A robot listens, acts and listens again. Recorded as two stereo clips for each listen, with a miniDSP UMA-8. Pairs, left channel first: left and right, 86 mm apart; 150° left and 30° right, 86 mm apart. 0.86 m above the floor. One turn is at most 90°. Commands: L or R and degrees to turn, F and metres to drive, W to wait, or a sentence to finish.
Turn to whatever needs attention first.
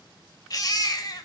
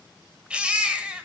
L50
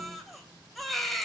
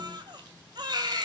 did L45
Facing the baby crying, 1 to 2 m away.